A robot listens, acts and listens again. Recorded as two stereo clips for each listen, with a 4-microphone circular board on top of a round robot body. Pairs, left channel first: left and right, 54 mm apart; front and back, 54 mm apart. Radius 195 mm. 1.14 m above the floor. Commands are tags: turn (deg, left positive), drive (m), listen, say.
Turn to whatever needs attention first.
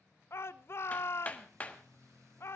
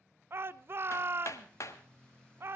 <turn deg="135"/>
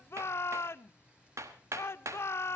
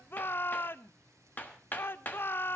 <turn deg="50"/>
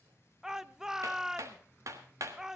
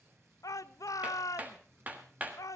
<turn deg="-10"/>
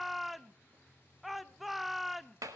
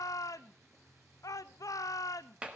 <say>Found it: a shout, straight ahead, under 1 m away.</say>